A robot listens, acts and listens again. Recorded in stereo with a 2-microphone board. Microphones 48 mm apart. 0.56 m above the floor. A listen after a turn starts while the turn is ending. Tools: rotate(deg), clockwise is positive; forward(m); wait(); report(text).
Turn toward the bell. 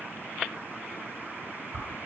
wait()
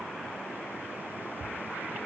wait()
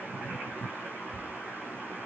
report("I can't make out a bell to turn to.")